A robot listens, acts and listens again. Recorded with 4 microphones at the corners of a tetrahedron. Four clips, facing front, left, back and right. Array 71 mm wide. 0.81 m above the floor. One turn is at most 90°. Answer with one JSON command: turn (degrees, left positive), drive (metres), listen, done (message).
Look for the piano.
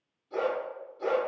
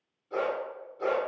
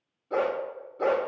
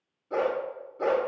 {"listen": true}
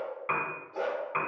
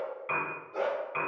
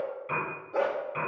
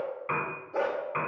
{"turn": -20}
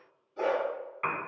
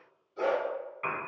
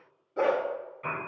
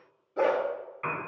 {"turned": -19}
{"done": "Found it: a piano, straight ahead."}